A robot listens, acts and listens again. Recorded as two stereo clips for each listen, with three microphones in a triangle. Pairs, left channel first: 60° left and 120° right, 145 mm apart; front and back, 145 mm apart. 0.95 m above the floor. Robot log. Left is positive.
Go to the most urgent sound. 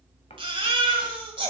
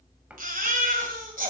note: The baby crying: 170° right.
cmd yaw -170
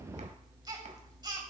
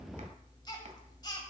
note: The baby crying is now 60° right.
cmd yaw -60
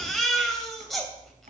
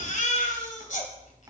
note: The baby crying is now 30° right.
cmd yaw -30
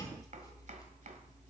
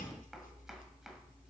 cmd idle
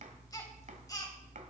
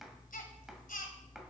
cmd fwd 1.0
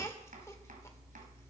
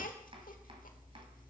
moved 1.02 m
cmd idle
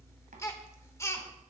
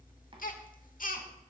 note: The baby crying is now 10° right.
cmd yaw -10
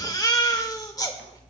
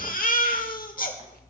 cmd fwd 1.0
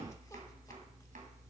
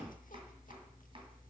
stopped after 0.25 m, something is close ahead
cmd idle
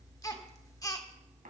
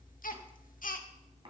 end: I am next to the baby crying.